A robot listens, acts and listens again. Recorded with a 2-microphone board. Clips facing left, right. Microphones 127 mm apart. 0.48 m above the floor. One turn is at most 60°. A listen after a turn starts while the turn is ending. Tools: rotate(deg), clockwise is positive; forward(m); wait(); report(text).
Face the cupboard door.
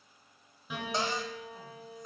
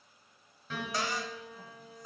rotate(-25)
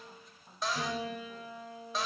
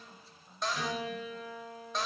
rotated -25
report("Facing the cupboard door.")